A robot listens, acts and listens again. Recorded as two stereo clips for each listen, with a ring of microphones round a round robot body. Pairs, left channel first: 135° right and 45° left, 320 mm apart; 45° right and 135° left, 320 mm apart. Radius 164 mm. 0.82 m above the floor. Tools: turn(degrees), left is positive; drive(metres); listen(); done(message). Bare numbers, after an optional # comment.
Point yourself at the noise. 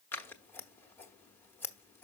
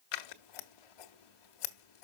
# The scissors: 50° right.
turn(-50)
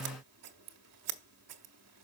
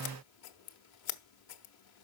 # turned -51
done("Found it: scissors, straight ahead, 1 to 2 m away.")